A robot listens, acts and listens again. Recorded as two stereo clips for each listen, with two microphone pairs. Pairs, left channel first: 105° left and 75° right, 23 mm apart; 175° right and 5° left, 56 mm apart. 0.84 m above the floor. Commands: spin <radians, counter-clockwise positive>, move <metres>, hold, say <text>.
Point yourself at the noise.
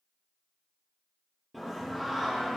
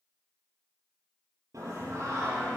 spin 0.17
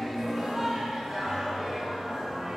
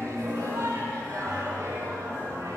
say Found it: singing, straight ahead, over 4 m away.